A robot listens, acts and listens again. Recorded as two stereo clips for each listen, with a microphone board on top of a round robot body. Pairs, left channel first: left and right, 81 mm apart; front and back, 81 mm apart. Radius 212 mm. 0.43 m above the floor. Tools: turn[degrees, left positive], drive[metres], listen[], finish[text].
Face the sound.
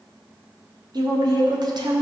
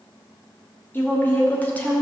Thought: The woman speaking: 75° right.
Action: turn[-75]
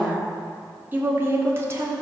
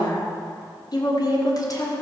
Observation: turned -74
Thought: The woman speaking is now 40° right.
Action: turn[-40]
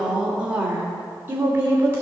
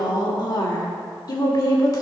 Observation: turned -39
Thought: The woman speaking is now 25° right.
Action: turn[-25]
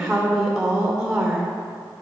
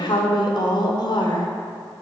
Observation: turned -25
Action: finish[Facing the woman speaking.]